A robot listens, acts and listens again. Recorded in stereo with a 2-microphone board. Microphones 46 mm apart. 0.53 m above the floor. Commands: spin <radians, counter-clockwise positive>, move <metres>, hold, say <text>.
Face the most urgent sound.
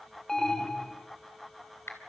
spin 0.52
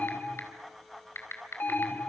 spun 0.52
spin 2.36
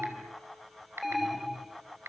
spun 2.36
say Found it: an alarm, straight ahead.